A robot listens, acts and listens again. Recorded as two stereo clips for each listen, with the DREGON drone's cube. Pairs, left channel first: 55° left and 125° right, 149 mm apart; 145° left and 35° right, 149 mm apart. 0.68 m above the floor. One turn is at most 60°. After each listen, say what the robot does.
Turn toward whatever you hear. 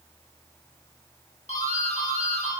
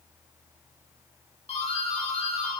Turn 60° left.
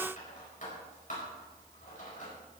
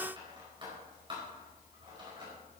Turn 25° left.
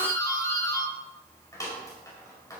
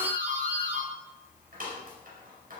Turn 15° right.
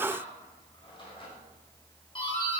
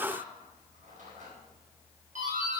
Found it: a doorbell, straight ahead.